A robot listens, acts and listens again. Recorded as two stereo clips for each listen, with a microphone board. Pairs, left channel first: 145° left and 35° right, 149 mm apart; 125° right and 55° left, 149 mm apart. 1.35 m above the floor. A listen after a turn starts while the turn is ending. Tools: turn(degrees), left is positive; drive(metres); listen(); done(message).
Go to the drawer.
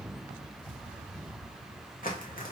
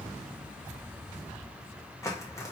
listen()
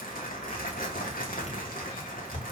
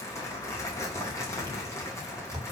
turn(degrees=110)
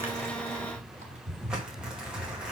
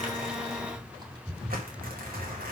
drive(metres=1.0)
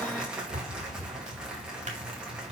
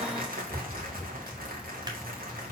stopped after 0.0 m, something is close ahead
done("Blocked. The drawer is further on, straight ahead.")